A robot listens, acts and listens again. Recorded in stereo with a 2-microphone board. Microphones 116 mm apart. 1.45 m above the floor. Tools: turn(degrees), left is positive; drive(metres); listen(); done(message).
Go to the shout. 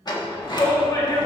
turn(degrees=30)
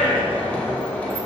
turn(degrees=120)
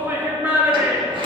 turn(degrees=-20)
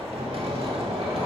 listen()
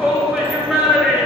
drive(metres=1.0)
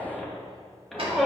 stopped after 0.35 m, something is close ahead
done("Something is in my way. I am facing the shout but have not reached it.")